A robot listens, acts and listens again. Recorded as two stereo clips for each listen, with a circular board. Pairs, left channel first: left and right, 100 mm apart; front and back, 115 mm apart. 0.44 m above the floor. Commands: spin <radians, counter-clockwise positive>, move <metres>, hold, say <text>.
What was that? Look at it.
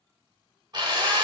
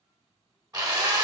spin -2.18
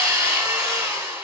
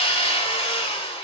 spin -0.52
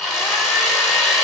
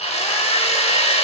say Found it: a drill, straight ahead, 1 to 2 m away.